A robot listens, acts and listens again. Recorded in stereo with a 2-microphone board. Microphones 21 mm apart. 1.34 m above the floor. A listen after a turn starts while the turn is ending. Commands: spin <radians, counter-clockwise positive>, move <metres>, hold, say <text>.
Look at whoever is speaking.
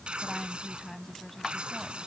spin 0.52
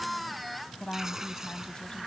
spin 2.36
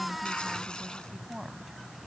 spin -0.35
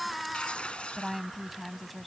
say Found it: a woman speaking, straight ahead.